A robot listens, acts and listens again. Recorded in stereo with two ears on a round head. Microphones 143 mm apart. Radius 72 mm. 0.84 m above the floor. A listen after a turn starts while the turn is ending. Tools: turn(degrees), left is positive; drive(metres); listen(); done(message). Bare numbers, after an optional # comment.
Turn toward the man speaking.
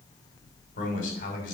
# The man speaking: about 55° left or 125° left.
turn(55)
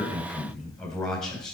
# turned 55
done("Facing the man speaking, over 4 m away.")